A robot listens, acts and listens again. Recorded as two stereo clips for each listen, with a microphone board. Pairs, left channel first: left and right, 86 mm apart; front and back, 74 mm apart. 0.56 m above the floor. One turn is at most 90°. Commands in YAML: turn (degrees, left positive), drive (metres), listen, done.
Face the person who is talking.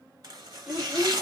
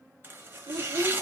turn: -90
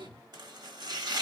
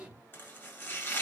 turn: -90
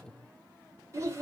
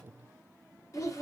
turn: -40
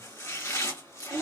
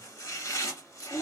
turn: -10
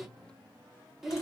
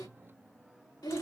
done: "Facing the child speaking."